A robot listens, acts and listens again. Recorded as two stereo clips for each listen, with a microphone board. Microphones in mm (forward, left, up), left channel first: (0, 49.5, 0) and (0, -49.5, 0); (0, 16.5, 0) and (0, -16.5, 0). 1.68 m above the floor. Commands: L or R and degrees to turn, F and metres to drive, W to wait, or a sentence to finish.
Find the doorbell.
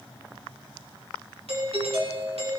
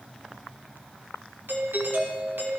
R90
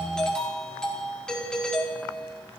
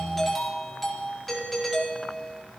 Facing the doorbell, over 4 m away.